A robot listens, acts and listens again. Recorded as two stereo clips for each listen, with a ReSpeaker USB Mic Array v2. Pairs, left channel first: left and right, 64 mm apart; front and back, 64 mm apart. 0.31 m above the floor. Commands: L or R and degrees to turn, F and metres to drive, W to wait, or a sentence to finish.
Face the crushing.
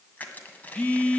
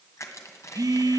L30
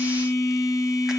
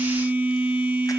W
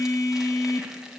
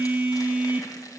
W
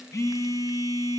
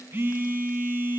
I heard crushing from this way, but can't make it out now.